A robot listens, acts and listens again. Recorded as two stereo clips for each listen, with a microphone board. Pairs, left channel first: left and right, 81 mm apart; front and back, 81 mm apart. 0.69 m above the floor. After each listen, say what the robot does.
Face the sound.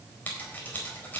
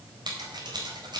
Turn 160° left.
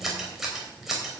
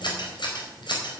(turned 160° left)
Facing the scissors, over 4 m away.